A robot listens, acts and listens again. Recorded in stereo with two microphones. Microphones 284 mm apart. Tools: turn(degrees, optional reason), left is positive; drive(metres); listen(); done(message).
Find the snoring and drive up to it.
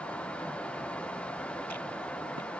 listen()
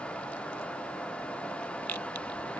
listen()
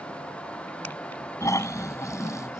turn(degrees=30)
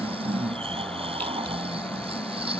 turn(degrees=-20, reason="So it is at 20° right.")
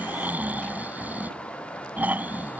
drive(metres=1.0)
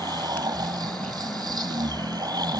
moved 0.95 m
turn(degrees=-15, reason="The snoring is now 15° right.")
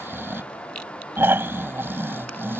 turn(degrees=-10, reason="The snoring is now 10° right.")
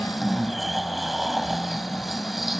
drive(metres=1.0)
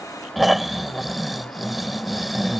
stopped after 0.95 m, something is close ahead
done("Arrived at the snoring, straight ahead.")